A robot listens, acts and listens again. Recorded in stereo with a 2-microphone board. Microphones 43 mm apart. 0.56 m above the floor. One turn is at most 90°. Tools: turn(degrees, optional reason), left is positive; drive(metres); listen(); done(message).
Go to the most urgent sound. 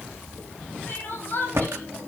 turn(degrees=45, reason="The crying: about 45° left or 135° left.")
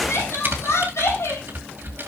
turn(degrees=85, reason="So it is at 85° left.")
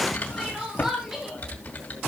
turn(degrees=-10, reason="The crying is now 10° right.")
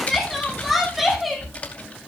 drive(metres=1.0)
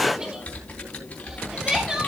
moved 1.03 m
turn(degrees=-15, reason="The crying is now 15° right.")
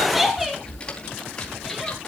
drive(metres=1.0)
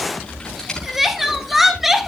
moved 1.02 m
drive(metres=1.0)
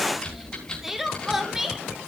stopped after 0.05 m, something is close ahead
done("I am next to the crying.")